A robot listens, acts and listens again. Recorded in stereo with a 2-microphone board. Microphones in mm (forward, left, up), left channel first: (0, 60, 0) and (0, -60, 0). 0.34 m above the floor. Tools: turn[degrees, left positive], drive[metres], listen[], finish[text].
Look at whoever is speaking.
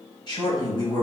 Thought: The man speaking: about 40° left or 140° left.
Action: turn[40]
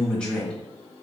Thought: So it is at 10° left.
Action: turn[10]
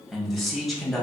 Action: finish[Facing the man speaking, 1 to 2 m away.]